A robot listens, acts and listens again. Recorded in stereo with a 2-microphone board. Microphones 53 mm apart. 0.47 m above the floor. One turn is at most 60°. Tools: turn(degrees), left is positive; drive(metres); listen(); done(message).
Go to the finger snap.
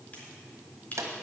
turn(degrees=30)
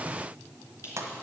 listen()
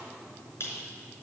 turn(degrees=60)
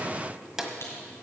turn(degrees=60)
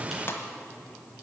listen()
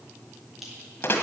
drive(metres=1.0)
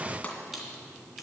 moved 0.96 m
drive(metres=1.0)
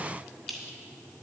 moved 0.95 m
drive(metres=1.0)
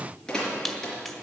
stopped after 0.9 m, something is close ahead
done("I am next to the finger snap.")